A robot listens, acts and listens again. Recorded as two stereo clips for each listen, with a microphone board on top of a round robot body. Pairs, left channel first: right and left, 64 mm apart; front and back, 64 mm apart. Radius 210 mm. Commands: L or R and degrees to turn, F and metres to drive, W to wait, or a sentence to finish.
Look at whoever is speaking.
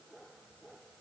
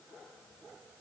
W
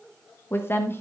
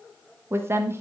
R140
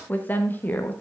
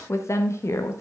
R35
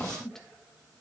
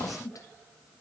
R10
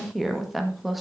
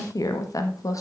Facing the woman speaking.